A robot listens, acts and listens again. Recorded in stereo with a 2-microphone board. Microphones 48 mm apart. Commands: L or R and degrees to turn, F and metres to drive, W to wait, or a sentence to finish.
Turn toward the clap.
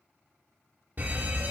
W
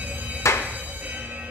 L75
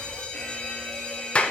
L25
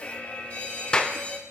L20
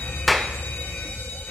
Found it: a clap, straight ahead, under 1 m away.